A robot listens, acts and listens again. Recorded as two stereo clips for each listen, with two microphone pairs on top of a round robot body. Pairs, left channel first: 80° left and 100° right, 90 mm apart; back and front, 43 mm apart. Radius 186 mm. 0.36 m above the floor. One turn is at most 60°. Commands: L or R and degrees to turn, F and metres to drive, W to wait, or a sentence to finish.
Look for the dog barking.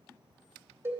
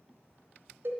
W
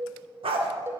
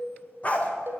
R60
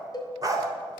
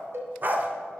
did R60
R45
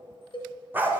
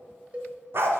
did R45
R30
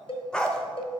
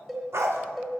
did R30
Facing the dog barking.